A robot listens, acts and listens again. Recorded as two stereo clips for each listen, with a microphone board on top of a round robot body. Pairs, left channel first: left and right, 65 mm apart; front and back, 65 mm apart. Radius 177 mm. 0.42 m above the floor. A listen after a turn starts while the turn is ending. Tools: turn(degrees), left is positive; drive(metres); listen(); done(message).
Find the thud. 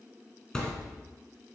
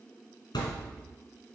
turn(degrees=10)
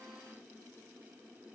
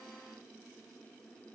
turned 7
done("I heard a thud from this way, but can't make it out now.")